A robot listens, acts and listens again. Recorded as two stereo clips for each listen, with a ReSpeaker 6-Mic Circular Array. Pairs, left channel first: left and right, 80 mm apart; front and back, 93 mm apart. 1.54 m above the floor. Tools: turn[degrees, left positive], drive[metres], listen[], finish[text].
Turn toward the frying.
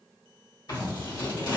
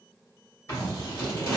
Action: listen[]
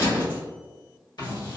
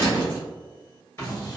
Action: listen[]
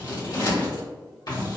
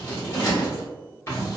Action: finish[I can't make out frying to turn to.]